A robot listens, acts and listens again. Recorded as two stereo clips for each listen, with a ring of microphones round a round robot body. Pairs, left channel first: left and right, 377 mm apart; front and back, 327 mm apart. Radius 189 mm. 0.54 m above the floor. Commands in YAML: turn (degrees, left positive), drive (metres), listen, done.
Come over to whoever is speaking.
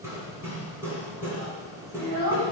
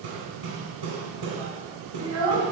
turn: -130
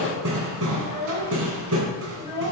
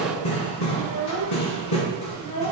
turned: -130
turn: 15
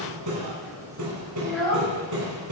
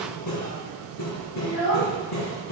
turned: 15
drive: 1.0
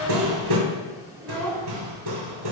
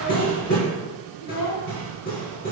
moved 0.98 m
drive: 1.0
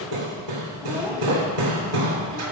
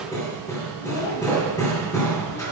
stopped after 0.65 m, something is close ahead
listen: true
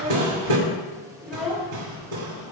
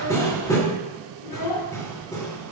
done: "I am next to the child speaking."